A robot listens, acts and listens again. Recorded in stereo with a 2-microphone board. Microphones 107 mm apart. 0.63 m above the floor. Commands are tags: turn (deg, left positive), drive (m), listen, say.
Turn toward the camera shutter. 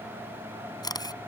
<turn deg="35"/>
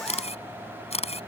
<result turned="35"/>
<turn deg="105"/>
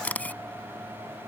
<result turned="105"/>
<turn deg="15"/>
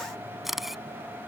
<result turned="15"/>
<say>Facing the camera shutter.</say>